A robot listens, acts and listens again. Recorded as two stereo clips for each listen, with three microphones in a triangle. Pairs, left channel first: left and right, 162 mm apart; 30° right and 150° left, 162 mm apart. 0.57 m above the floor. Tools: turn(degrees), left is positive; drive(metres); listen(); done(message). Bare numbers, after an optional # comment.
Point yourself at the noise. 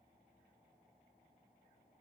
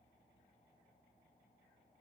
listen()
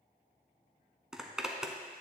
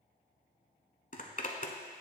done("Facing the zipper.")